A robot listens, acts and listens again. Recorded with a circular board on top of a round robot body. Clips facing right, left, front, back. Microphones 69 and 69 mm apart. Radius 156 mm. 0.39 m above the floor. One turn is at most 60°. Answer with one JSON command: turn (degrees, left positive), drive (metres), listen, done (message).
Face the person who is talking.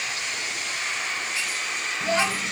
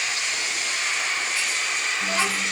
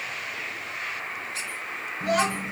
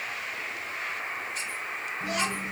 {"turn": -35}
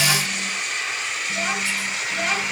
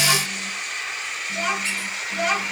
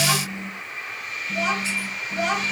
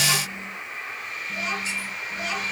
{"done": "Facing the child speaking."}